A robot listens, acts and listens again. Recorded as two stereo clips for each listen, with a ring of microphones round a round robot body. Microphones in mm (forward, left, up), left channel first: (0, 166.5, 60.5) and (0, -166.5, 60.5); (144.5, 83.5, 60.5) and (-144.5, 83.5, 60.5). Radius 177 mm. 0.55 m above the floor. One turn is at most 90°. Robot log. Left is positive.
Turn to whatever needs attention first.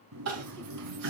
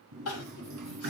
note: The crying: 45° right.
cmd yaw -45
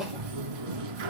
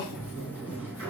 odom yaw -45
end: Facing the crying.